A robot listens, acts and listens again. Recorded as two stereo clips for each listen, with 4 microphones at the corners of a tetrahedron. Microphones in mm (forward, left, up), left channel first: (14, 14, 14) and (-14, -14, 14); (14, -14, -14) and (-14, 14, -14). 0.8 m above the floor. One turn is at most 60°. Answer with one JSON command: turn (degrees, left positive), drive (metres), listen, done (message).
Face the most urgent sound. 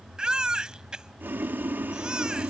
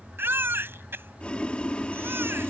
{"turn": 60}
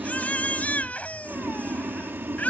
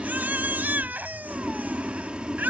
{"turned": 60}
{"turn": 60}
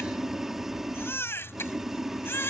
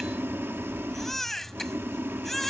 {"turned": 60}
{"turn": 40}
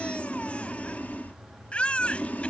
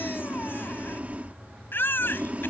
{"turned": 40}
{"turn": -20}
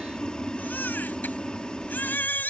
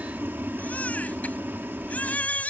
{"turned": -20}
{"done": "Found it: a baby crying, straight ahead."}